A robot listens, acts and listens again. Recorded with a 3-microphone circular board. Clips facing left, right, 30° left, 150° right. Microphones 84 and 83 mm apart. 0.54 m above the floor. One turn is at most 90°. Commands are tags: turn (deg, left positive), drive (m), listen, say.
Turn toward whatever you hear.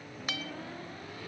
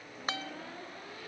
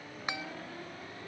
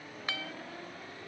<turn deg="-40"/>
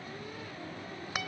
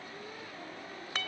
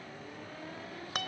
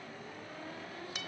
<turn deg="15"/>
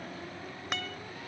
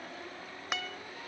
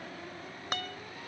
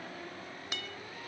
<say>Facing the guitar.</say>